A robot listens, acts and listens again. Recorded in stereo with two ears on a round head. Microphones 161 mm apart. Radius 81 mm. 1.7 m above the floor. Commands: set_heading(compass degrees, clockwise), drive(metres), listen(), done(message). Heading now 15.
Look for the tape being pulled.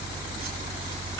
listen()
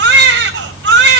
listen()
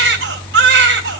done("I can't make out tape being pulled, only a baby crying.")